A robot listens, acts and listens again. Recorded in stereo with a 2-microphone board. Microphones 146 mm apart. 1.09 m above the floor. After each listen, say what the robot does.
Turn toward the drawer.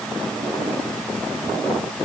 Keep listening.
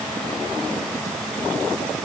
Keep listening.
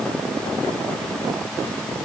I can't make out a drawer.